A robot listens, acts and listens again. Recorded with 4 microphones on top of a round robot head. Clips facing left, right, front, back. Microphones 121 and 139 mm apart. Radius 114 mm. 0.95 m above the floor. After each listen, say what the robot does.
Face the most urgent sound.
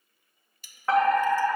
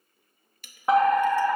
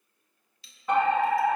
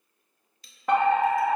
Turn 160° right.
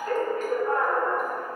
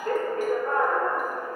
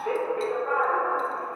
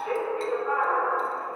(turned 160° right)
Turn 40° right.
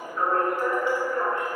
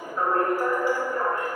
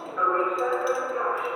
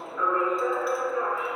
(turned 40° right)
Turn 20° right.
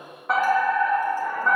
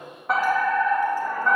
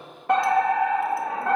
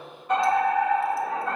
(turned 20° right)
Facing the fire alarm.